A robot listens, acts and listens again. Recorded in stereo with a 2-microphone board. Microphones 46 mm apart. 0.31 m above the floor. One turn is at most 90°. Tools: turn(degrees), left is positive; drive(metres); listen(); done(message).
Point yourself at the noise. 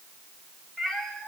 turn(degrees=30)
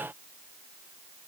listen()
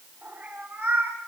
turn(degrees=-25)
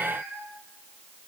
turn(degrees=-10)
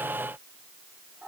done("Found it: a cat meowing, straight ahead.")